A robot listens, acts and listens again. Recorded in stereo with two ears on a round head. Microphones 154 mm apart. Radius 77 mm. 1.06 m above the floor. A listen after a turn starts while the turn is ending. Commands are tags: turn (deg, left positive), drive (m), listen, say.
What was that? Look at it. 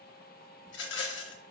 <turn deg="90"/>
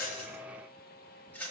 <turn deg="10"/>
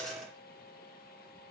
<listen/>
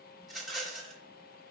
<say>Found it: a rattle, straight ahead.</say>